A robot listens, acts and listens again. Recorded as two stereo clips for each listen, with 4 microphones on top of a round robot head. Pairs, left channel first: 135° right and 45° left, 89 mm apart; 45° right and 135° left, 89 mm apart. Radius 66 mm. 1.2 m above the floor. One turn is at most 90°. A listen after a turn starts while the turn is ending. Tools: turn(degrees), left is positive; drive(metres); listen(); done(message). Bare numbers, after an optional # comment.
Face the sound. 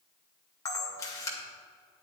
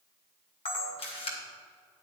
# The camera shutter: 75° right.
turn(-75)
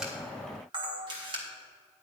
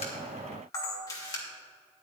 done("Facing the camera shutter, 2 to 4 m away.")